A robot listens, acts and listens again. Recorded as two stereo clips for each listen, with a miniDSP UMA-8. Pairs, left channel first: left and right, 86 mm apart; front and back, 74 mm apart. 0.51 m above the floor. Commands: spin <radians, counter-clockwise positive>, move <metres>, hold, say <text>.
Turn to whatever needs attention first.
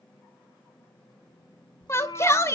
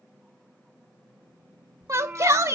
spin 2.44
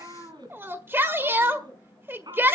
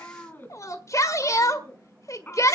spin -0.52
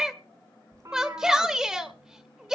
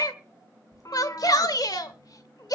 spin -0.17
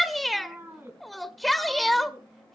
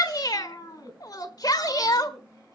say Facing the shout.